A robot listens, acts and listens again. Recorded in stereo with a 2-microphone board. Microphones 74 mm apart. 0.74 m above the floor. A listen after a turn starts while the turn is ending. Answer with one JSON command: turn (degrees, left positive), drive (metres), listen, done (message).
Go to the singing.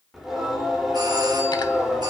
{"turn": -30}
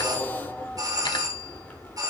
{"turn": 25}
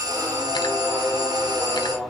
{"drive": 1.0}
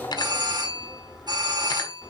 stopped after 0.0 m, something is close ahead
{"done": "Blocked. The singing is further on, straight ahead."}